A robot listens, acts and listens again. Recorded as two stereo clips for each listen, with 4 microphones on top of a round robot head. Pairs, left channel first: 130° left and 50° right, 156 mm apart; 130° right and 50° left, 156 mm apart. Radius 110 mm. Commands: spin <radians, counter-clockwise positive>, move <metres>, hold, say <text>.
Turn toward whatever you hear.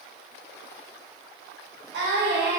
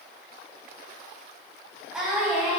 spin -0.61
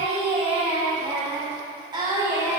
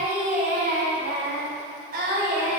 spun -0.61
spin 0.35
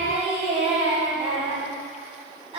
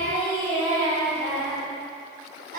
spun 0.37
spin 0.17
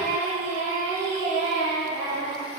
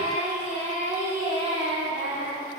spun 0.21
say Facing the singing.